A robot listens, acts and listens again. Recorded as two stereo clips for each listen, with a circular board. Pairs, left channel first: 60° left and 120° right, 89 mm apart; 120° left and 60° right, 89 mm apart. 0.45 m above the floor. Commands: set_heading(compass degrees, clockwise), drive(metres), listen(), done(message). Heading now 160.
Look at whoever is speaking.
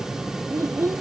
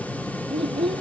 set_heading(225)
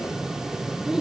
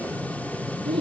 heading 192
set_heading(227)
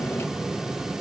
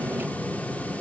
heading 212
set_heading(227)
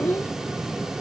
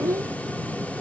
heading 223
done("Found it: a child speaking, straight ahead.")